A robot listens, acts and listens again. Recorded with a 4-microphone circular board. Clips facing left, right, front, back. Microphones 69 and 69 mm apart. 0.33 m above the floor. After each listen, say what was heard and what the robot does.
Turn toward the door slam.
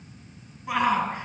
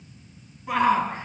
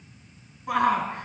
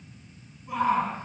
Keep listening.
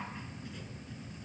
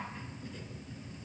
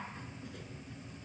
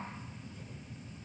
Keep listening.
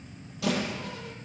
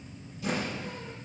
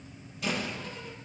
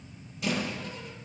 The door slam: 90° left. Turn 90° left.
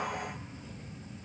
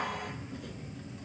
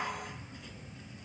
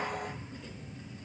Facing where the door slam came from. I can't hear it now.